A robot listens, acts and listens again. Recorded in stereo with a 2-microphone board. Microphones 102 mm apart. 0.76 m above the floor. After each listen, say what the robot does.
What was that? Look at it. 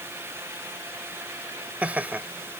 Turn 30° right.
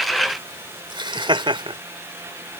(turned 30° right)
Turn 125° right.
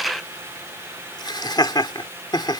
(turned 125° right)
Turn 45° left.
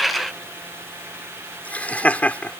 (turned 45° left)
Turn 15° left.
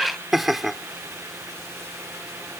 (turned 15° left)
Facing the laughter.